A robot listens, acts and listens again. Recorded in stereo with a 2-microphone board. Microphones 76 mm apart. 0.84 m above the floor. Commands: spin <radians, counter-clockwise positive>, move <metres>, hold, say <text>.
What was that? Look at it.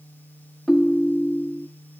spin 0.52
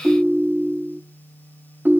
spin -0.44
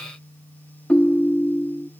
spin 0.26
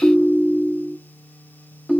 say Facing the ringtone, under 1 m away.